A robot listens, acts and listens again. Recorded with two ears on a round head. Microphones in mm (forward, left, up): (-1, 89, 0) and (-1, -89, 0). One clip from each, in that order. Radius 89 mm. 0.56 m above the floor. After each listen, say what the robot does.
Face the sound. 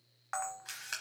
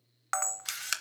Turn 65° right.
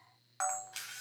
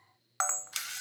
Turn 50° right.
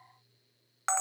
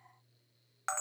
Turn 15° left.
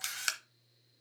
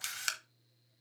Facing the camera shutter, under 1 m away.